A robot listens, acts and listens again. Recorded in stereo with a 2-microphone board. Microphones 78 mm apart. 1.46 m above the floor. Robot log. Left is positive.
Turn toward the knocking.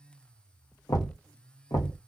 note: The knocking: about 55° left or 125° left.
cmd yaw +55
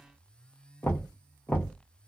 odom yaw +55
note: So it is at 30° left.
cmd yaw +30
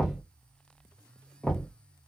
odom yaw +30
note: The knocking is now 15° left.
cmd yaw +15
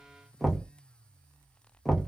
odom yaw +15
end: Facing the knocking.